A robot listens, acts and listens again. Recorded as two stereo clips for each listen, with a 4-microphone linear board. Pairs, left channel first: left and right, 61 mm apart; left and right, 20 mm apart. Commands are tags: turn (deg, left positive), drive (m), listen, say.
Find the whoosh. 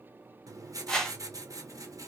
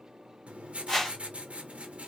<turn deg="30"/>
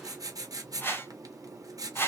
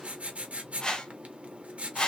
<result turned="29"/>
<turn deg="140"/>
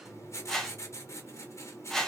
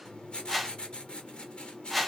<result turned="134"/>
<say>Facing the whoosh, under 1 m away.</say>